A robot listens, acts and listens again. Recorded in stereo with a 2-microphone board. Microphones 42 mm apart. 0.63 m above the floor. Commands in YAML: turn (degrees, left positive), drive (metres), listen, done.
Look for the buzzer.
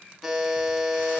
turn: -30
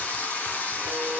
listen: true
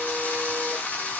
listen: true
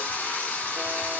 done: "I heard a buzzer, but can't make it out now. It was about 25° left or 145° right."